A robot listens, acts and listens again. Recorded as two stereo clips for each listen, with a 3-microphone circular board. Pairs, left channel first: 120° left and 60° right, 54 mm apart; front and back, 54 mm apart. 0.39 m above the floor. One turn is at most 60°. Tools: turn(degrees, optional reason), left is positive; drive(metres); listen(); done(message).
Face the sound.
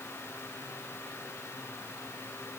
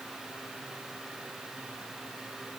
listen()
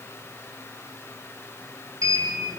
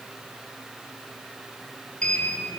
turn(degrees=-60, reason="The sliding door: 70° right.")
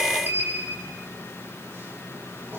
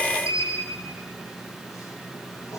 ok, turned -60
turn(degrees=-15, reason="The sliding door is now 15° right.")
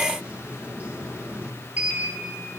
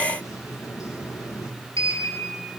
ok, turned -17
done("Facing the sliding door, over 4 m away.")